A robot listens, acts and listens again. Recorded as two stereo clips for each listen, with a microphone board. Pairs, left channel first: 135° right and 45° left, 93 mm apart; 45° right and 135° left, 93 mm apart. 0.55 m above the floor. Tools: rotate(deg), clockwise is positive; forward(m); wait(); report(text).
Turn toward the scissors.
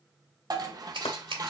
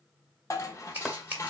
rotate(-65)
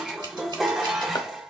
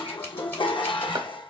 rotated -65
wait()
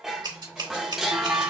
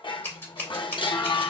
rotate(-20)
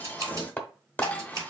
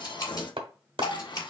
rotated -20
report("Found it: scissors, straight ahead, 2 to 4 m away.")